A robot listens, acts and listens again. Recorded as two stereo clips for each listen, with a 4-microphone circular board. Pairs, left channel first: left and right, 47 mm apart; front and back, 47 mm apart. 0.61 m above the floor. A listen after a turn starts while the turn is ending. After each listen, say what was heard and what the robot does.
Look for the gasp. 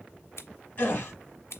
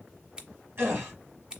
The gasp: 145° left. Turn 145° left.
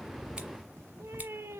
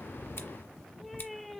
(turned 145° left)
Facing where the gasp came from. I can't hear it now.